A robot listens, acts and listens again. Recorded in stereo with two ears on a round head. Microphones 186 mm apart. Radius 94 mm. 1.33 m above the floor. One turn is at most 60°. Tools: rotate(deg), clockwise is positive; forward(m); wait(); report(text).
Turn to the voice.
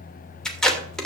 wait()
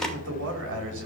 rotate(60)
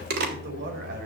rotate(50)
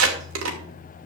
wait()
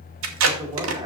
rotate(20)
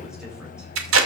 wait()
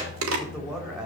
report("Found it: a man speaking, straight ahead.")